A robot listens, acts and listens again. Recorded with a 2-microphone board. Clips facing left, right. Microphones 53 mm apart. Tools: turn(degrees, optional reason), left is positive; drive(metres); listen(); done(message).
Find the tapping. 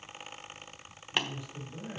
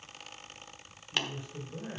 turn(degrees=15, reason="The tapping: about 15° left or 165° left.")
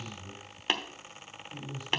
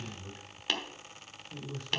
turn(degrees=150, reason="So it is at 150° left.")
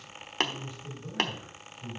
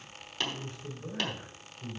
turn(degrees=60, reason="The tapping is now 60° left.")
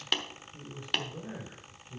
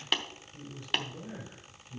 done("Facing the tapping, 1 to 2 m away.")